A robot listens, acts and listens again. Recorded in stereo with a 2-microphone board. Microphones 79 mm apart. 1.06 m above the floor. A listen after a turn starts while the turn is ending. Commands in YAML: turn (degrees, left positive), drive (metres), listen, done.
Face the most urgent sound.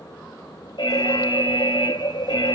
turn: 90
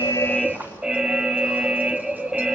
turn: -10
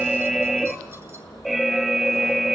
done: "Found it: an alarm, straight ahead."